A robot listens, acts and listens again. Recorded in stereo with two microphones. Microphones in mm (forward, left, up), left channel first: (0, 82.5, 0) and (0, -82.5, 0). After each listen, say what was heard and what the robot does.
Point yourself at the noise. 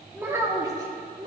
The child speaking: about 25° right or 155° right. Turn 25° right.
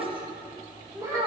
The child speaking: about 20° right or 160° right. Turn 20° right.
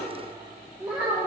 So it is at 10° right. Turn 10° right.
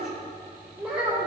Found it: a child speaking, straight ahead, 2 to 4 m away.